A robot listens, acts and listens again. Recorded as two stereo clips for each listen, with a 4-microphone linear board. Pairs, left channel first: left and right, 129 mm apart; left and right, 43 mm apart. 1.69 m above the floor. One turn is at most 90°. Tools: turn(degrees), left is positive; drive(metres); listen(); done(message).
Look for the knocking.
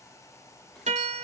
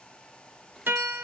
listen()
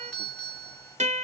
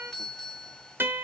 listen()
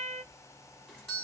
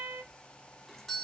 done("I can't make out knocking to turn to.")